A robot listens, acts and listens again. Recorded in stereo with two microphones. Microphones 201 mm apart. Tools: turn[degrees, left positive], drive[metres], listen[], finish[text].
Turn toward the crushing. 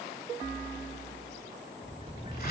Action: listen[]
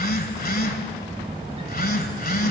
Action: listen[]
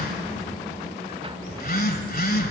Action: finish[I can't make out crushing, only a phone buzzing and a sliding door.]